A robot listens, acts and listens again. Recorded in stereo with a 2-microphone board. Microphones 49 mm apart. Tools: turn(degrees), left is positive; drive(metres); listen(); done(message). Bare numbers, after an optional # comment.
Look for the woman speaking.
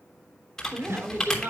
# The woman speaking: about 50° right or 130° right.
turn(-50)
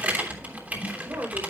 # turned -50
# So it is at 80° right.
turn(-80)
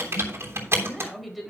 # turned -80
done("Found it: a woman speaking, straight ahead, over 4 m away.")